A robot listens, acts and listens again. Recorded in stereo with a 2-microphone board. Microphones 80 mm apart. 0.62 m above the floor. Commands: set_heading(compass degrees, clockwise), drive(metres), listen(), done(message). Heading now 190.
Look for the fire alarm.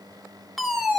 set_heading(160)
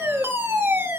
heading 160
set_heading(195)
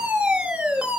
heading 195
set_heading(210)
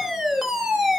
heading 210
done("Facing the fire alarm, 2 to 4 m away.")